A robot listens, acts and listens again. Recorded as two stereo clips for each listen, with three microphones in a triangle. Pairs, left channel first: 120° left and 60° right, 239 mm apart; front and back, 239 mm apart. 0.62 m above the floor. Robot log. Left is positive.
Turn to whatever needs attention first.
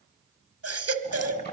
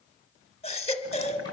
note: The baby crying: 60° right.
cmd yaw -60
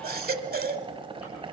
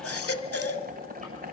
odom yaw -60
note: The baby crying is now 15° right.
cmd yaw -15
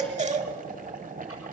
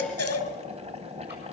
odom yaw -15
end: Found it: a baby crying, straight ahead, 1 to 2 m away.